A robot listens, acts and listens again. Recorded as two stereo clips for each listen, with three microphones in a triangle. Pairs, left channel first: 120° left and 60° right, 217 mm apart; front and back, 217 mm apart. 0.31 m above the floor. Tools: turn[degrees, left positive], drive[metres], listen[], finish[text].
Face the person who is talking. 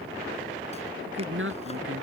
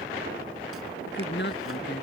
Thought: The woman speaking: 35° right.
Action: turn[-35]
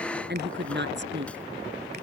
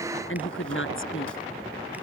Thought: The woman speaking is now 25° right.
Action: turn[-25]
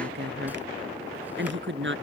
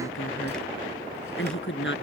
Thought: The woman speaking is now 30° right.
Action: turn[-30]
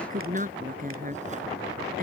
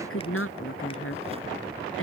Thought: The woman speaking is now 10° right.
Action: turn[-10]
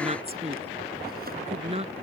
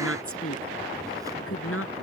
Action: finish[Found it: a woman speaking, straight ahead.]